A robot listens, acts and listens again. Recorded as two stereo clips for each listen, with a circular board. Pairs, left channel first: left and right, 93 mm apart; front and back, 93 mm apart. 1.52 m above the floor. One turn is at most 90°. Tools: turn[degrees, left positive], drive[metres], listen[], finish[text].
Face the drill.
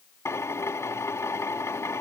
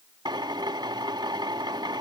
Thought: The drill: 150° left.
Action: turn[90]
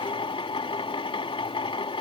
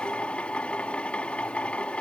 Thought: The drill is now 75° left.
Action: turn[75]
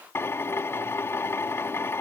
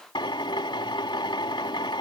Thought: The drill is now 25° left.
Action: turn[25]
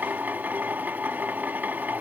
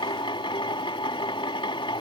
Thought: The drill is now 20° right.
Action: turn[-20]
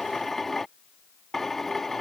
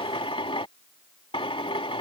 Action: finish[Facing the drill.]